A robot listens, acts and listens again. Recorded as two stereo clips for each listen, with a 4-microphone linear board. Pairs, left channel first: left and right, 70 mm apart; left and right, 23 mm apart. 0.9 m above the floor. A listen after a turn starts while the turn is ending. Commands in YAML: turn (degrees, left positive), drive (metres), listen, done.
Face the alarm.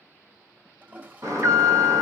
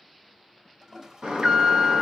turn: -45
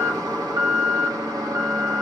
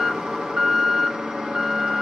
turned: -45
turn: -80
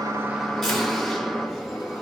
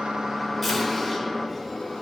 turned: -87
done: "Found it: an alarm, straight ahead, 1 to 2 m away."